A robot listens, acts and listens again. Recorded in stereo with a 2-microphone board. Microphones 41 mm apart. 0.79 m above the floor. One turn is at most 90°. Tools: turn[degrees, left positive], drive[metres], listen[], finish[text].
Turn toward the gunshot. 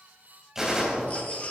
Action: turn[-30]
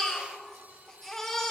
Action: listen[]
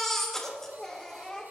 Action: finish[I heard a gunshot, but can't make it out now. It was about 15° left or 135° right.]